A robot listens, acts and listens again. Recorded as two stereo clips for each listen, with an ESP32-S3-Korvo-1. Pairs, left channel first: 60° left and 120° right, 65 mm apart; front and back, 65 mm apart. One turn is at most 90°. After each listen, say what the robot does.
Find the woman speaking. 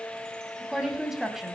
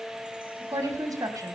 Turn 90° left.
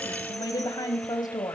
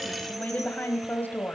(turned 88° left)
Turn 60° left.
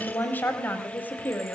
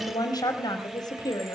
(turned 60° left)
Found it: a woman speaking, straight ahead, over 4 m away.